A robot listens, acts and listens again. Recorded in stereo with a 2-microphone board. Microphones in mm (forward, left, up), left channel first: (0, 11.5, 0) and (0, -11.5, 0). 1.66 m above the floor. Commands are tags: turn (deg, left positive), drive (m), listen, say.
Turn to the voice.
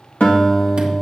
<listen/>
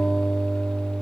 <listen/>
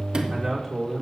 <turn deg="-30"/>
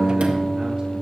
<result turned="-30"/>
<listen/>
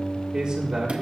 <turn deg="-145"/>
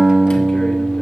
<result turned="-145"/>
<listen/>
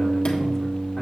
<listen/>
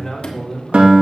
<turn deg="15"/>
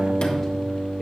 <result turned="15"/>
<listen/>
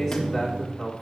<say>Facing the man speaking, 2 to 4 m away.</say>